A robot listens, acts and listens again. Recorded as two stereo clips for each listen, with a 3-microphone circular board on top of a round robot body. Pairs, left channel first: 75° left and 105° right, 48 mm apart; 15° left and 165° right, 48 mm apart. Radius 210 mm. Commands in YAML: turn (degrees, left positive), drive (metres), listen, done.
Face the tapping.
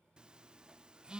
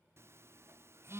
listen: true
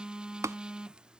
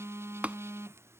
turn: -100
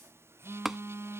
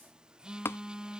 turn: -20
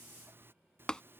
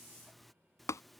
done: "Facing the tapping."